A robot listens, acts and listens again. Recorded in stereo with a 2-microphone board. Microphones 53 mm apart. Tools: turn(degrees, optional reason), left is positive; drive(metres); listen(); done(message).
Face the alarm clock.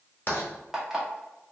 turn(degrees=-30)
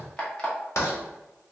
turn(degrees=20, reason="So it is at 20° left.")
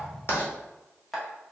done("Found it: an alarm clock, straight ahead.")